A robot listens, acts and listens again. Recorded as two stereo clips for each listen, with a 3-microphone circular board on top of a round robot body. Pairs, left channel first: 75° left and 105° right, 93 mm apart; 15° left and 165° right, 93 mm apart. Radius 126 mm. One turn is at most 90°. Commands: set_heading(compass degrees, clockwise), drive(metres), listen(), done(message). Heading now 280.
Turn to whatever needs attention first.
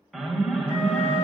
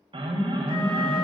set_heading(190)
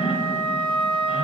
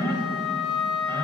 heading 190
set_heading(115)
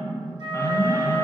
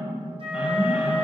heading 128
set_heading(118)
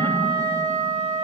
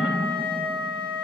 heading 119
listen()
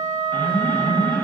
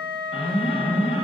done("Found it: an alarm, straight ahead.")